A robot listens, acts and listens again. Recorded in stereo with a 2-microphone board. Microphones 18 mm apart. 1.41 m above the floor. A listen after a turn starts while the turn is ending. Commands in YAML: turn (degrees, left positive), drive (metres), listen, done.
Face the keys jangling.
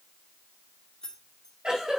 turn: 40
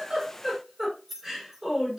turn: -15
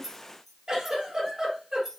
turn: -20
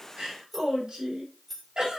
turn: -15
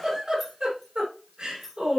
done: "Found it: keys jangling, straight ahead, 2 to 4 m away."